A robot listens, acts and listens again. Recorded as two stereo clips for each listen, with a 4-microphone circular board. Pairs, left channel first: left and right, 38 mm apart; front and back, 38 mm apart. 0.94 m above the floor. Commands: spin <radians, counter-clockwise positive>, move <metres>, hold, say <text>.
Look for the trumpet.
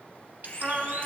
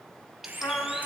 spin -0.35
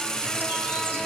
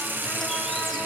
hold
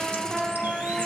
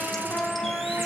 say Found it: a trumpet, straight ahead, 1 to 2 m away.